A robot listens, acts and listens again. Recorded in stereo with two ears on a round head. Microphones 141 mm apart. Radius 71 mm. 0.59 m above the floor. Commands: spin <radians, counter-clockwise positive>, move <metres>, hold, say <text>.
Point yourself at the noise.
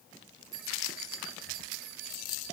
spin -1.57
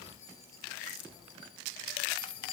spin 0.52
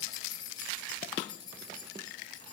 spin 0.44
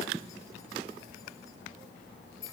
spin 0.35
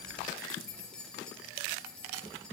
say Facing the keys jangling.